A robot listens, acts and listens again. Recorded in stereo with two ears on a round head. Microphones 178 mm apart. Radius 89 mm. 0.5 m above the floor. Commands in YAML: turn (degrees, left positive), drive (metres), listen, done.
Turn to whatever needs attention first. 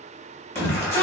turn: 30
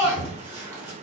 turn: -15
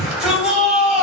done: "Facing the shout."